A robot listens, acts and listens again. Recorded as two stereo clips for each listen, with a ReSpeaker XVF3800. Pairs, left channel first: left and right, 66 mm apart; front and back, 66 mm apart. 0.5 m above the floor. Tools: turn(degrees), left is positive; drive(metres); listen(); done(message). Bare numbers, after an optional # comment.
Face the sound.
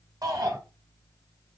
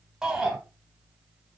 # The shout: 100° right.
turn(-100)
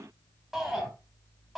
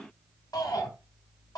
done("Found it: a shout, straight ahead.")